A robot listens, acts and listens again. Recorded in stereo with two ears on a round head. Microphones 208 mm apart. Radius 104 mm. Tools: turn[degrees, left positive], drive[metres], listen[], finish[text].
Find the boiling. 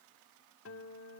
Action: listen[]
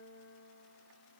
Action: listen[]
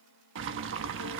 Thought: The boiling: about 55° right or 125° right.
Action: turn[-55]
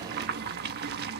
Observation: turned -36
Thought: So it is at 55° right.
Action: turn[-55]
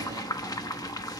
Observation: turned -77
Thought: The boiling is now 20° left.
Action: turn[20]
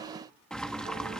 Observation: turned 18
Action: finish[Facing the boiling, 1 to 2 m away.]